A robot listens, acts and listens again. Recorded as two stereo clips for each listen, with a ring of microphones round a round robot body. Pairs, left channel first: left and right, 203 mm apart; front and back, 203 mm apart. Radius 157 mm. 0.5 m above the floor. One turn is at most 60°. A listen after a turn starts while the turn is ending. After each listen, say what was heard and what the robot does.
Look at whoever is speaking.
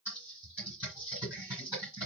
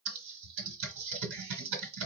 Keep listening.
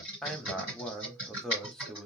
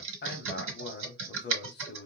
Found it: a man speaking, straight ahead.